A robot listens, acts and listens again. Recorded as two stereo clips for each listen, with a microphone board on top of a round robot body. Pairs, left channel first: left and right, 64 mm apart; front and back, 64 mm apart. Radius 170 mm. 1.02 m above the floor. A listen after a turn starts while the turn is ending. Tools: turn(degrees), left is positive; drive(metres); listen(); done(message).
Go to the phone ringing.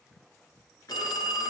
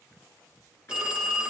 turn(degrees=105)
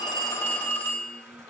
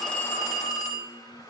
turn(degrees=30)
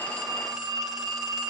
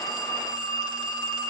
drive(metres=1.0)
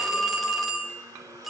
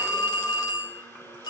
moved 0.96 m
drive(metres=1.0)
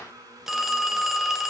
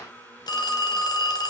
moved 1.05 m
drive(metres=1.0)
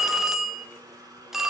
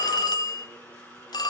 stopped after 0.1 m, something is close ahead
done("I am next to the phone ringing.")